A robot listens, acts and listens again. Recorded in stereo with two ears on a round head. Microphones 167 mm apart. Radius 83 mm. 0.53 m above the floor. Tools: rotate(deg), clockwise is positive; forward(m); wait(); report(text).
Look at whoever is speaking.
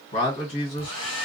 rotate(-30)
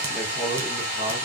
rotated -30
wait()
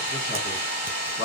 rotate(-115)
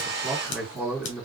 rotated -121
report("Found it: a man speaking, straight ahead, 2 to 4 m away.")